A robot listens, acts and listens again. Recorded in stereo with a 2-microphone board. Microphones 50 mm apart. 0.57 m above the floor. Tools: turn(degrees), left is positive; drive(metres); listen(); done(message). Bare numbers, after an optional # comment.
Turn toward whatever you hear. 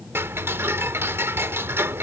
# The ticking: about 60° right or 120° right.
turn(-60)
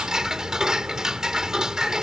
# So it is at 15° right.
turn(-15)
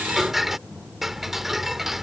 done("Facing the ticking.")